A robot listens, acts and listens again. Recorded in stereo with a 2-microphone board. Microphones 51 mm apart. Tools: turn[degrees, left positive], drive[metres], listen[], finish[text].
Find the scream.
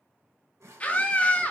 Thought: The scream: about 25° left or 155° left.
Action: turn[25]
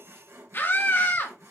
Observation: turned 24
Thought: So it is at 125° left.
Action: turn[125]
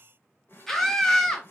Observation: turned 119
Thought: The scream is now 10° left.
Action: turn[10]
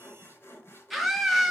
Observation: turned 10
Action: finish[Found it: a scream, straight ahead, 1 to 2 m away.]